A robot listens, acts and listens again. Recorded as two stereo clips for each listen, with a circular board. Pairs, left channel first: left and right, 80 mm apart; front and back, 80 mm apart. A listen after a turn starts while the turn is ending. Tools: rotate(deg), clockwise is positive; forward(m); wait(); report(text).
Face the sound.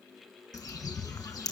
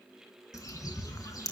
rotate(-45)
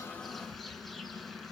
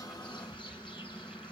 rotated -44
report("Found it: a bird, straight ahead, 2 to 4 m away.")